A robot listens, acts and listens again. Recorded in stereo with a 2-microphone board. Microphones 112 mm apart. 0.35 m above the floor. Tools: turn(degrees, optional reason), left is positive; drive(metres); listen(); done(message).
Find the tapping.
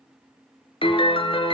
listen()
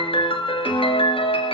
listen()
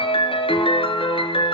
done("I can't make out tapping, only a piano.")